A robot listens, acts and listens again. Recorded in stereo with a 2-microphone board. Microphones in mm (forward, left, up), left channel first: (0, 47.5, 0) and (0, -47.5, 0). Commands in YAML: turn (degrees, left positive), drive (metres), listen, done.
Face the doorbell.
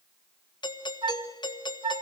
turn: 50
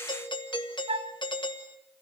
turn: 65
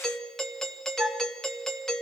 done: "Found it: a doorbell, straight ahead."